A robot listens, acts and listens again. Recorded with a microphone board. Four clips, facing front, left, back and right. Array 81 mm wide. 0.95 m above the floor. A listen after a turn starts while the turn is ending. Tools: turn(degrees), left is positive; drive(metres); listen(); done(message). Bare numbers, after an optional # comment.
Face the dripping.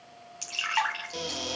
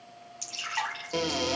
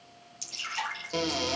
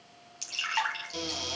# The dripping: 20° right.
turn(-20)
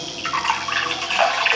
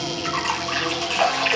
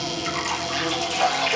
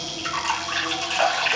done("Facing the dripping, 2 to 4 m away.")